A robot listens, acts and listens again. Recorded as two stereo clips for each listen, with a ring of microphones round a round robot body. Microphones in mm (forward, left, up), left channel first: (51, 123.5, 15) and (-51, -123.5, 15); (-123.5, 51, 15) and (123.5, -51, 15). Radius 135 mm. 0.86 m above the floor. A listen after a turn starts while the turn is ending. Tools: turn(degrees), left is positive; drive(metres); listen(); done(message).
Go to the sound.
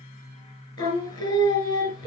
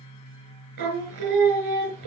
drive(metres=1.0)
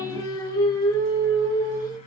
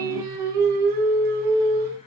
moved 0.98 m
turn(degrees=-10)
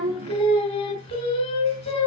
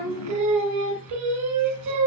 drive(metres=1.0)
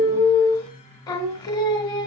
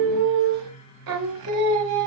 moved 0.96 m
turn(degrees=-10)
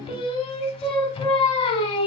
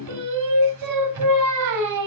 drive(metres=1.0)
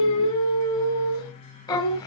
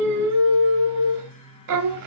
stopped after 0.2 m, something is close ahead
done("I am next to the singing.")